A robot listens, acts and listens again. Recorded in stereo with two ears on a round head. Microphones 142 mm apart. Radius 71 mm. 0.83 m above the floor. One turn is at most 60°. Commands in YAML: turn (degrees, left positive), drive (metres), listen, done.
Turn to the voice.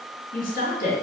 turn: 60
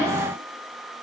listen: true
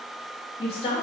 turn: 45
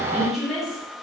done: "Facing the woman speaking, 1 to 2 m away."